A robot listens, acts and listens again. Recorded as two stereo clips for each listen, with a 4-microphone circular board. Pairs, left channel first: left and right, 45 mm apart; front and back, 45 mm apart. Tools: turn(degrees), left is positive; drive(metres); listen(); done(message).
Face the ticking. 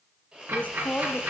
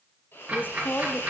turn(degrees=-115)
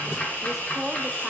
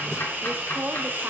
turn(degrees=40)
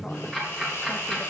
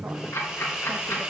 turn(degrees=10)
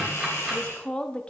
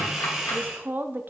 listen()
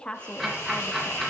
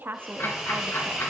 done("Facing the ticking, 2 to 4 m away.")